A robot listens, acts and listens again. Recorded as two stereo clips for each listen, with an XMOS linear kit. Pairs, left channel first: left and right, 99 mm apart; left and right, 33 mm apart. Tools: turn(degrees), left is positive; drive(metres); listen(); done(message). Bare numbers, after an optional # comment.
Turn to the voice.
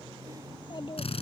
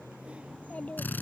# The child speaking: about 55° left or 125° left.
turn(55)
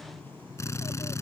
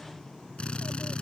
listen()
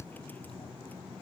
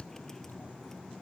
listen()
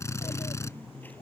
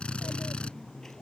done("I heard a child speaking, but can't make it out now. It was about straight ahead or 70° left.")